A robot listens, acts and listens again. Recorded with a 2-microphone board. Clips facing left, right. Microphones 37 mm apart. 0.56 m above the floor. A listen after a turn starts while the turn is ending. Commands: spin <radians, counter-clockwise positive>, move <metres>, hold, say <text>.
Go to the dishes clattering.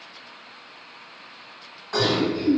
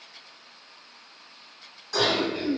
spin 0.52
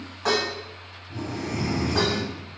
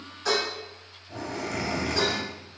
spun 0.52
spin 2.09
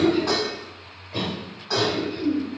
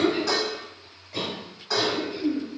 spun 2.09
spin 0.17
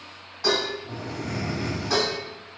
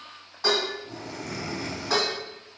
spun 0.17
move 1.0
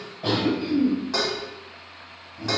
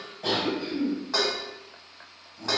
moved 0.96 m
move 1.0
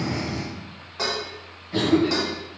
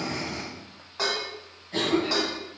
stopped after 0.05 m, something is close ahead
say Arrived at the dishes clattering, straight ahead.